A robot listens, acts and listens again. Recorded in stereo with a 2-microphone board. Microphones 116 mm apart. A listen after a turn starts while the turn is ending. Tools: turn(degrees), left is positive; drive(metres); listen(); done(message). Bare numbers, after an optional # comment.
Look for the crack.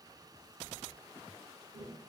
listen()
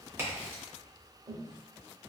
# The crack: about 20° right or 160° right.
turn(-20)
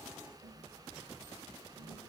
listen()
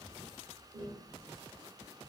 done("I heard a crack, but can't make it out now. It was about straight ahead or 140° right.")